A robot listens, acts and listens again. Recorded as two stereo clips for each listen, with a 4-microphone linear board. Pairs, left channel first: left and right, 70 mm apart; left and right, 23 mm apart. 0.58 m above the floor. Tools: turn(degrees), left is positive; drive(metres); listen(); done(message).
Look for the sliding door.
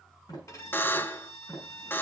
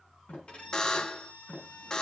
turn(degrees=90)
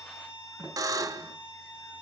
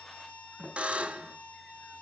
turn(degrees=-10)
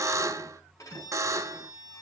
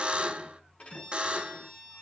listen()
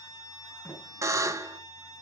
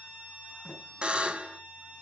done("Found it: a sliding door, straight ahead.")